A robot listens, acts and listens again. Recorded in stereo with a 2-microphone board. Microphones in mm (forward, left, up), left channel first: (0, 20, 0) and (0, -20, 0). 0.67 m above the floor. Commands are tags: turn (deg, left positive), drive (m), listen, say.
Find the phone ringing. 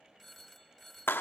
<turn deg="30"/>
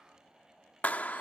<listen/>
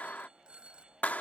<turn deg="-30"/>
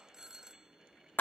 <turn deg="-15"/>
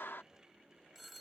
<say>Facing the phone ringing.</say>